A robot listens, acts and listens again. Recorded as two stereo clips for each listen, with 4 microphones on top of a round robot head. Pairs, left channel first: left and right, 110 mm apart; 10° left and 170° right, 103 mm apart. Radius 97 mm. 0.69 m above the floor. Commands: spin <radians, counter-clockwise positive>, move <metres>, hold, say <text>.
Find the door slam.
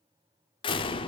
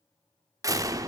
spin 2.36
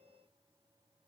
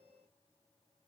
say Facing where the door slam came from. I can't hear it now.